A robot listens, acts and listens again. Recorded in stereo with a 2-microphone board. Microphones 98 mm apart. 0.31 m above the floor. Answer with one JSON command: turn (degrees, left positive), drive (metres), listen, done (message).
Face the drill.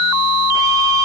{"listen": true}
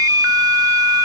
{"listen": true}
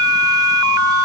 {"done": "I can't make out a drill to turn to."}